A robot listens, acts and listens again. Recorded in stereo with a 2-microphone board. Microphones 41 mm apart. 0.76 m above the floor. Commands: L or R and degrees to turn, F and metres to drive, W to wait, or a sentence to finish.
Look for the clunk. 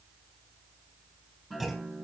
L30
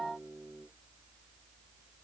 W
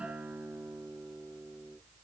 I heard a clunk, but can't make it out now. It was about 30° right or 150° left.